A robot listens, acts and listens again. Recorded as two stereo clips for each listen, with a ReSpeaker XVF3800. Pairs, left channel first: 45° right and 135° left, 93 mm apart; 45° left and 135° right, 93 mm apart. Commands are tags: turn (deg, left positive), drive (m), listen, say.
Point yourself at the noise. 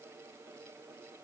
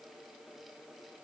<listen/>
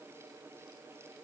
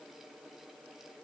<listen/>
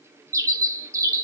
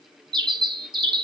<turn deg="-170"/>
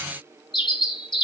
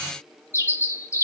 <turn deg="-15"/>
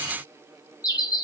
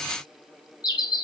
<say>Facing the bird.</say>